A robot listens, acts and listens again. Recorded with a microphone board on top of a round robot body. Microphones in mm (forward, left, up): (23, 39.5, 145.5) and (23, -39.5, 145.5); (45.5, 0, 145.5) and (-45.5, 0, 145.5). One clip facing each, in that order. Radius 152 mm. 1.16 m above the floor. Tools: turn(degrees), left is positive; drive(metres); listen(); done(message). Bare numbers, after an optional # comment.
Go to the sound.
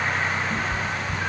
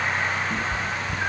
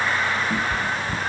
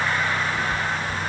# The cat meowing: 10° right.
turn(-10)
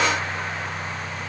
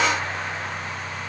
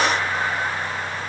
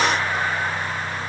listen()
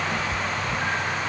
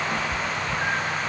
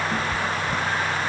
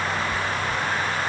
# The cat meowing is now 10° right.
turn(-10)
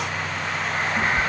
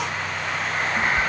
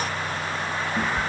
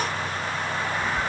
drive(1.0)
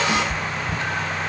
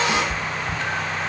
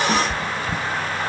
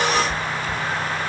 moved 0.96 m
# The cat meowing is now 10° left.
turn(10)
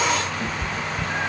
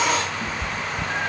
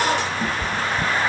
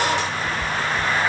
drive(1.0)
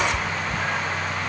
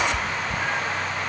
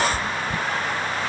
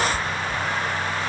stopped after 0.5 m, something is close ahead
done("I am next to the cat meowing.")